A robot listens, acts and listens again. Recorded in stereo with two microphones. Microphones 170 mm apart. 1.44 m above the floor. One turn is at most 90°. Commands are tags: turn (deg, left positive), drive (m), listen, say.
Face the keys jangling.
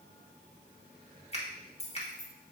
<turn deg="45"/>
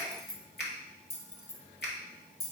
<turn deg="70"/>
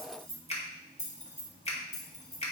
<turn deg="45"/>
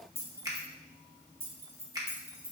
<turn deg="-15"/>
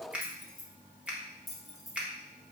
<say>Facing the keys jangling.</say>